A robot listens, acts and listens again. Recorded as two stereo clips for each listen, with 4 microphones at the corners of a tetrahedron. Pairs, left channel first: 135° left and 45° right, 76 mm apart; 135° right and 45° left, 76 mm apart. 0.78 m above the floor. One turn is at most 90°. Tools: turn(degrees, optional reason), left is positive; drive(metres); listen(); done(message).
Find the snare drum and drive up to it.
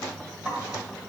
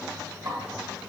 turn(degrees=25, reason="The snare drum: 25° left.")
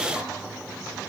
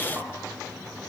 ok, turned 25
listen()
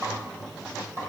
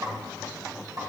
drive(metres=1.0)
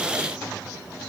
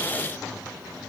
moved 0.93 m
listen()
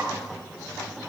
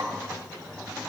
drive(metres=1.0)
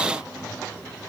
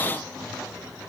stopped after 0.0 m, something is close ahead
listen()
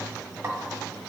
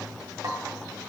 done("I am next to the snare drum.")